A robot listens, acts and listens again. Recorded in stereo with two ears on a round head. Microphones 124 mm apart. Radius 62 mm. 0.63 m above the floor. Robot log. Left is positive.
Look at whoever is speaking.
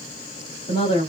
note: The woman speaking: about 40° left or 140° left.
cmd yaw +40
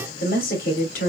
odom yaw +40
note: So it is at 95° left.
cmd yaw +95
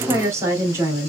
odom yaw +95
note: The woman speaking is now 20° right.
cmd yaw -20
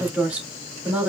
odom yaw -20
note: The woman speaking is now 10° right.
cmd yaw -10
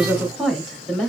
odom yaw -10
end: Facing the woman speaking.